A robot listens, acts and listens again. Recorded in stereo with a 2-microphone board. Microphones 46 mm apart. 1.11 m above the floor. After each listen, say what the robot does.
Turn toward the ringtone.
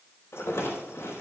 Keep listening.
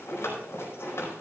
Keep listening.
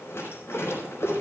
I can't make out a ringtone, only a rattle.